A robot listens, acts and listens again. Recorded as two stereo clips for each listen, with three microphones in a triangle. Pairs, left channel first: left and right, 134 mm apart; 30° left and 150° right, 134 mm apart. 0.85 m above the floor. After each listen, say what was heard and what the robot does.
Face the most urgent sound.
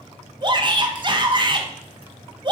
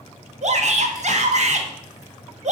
The shout: 140° right. Turn 140° right.
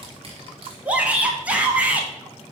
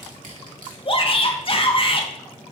The shout is now 10° right. Turn 10° right.
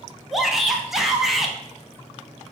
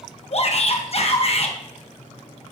Facing the shout, 1 to 2 m away.